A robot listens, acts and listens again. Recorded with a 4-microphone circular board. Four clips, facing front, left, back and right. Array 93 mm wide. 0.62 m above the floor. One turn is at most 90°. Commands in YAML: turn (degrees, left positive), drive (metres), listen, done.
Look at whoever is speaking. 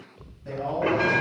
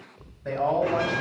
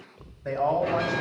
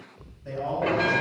turn: 90
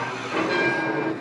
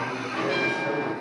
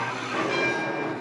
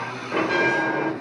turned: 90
turn: 55
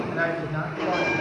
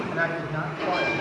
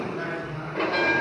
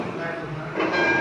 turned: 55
turn: 45
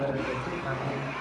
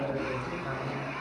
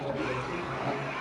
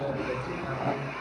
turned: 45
done: "Facing the man speaking."